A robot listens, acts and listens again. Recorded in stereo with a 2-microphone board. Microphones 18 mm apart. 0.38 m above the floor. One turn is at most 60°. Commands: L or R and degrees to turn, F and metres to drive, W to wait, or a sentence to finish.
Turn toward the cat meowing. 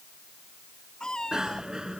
L40
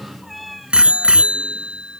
Found it: a cat meowing, straight ahead.